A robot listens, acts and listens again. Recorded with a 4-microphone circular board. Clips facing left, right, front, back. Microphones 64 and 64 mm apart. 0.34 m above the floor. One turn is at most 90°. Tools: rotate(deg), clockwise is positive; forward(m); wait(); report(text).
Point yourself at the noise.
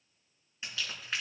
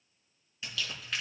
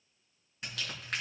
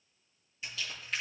rotate(-25)
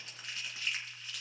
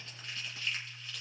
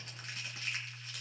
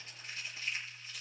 rotate(-15)
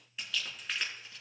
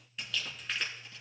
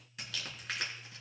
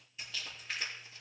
report("Facing the crumpling.")